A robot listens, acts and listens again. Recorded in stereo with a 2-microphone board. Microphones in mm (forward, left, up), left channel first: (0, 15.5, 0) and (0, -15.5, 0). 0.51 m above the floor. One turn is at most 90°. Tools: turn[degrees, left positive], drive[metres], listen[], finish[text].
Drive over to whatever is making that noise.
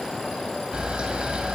Thought: The camera shutter: about 35° right or 145° right.
Action: turn[-35]
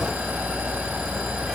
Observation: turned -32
Action: listen[]
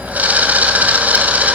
Thought: So it is at 110° right.
Action: turn[-90]
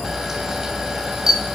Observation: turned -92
Thought: The camera shutter is now 20° right.
Action: turn[-20]
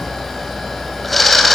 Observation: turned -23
Action: drive[1.0]
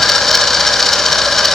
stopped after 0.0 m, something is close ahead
Thought: The camera shutter is now 10° left.
Action: turn[10]
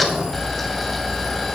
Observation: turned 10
Action: finish[Blocked. The camera shutter is further on, straight ahead.]